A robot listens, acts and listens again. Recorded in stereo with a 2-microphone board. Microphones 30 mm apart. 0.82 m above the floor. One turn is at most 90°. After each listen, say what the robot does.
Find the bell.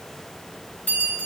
Turn 70° left.
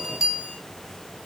Facing the bell, 2 to 4 m away.